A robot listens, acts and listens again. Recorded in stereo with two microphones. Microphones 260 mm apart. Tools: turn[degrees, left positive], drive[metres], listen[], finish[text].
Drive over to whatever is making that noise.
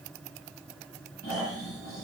Thought: The snoring: about 65° left or 115° left.
Action: turn[65]
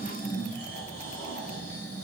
Thought: So it is at 40° left.
Action: turn[40]
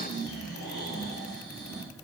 Thought: The snoring is now 15° left.
Action: turn[15]
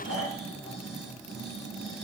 Action: drive[1.0]
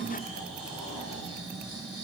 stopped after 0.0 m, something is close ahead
Action: finish[Blocked. The snoring is further on, straight ahead.]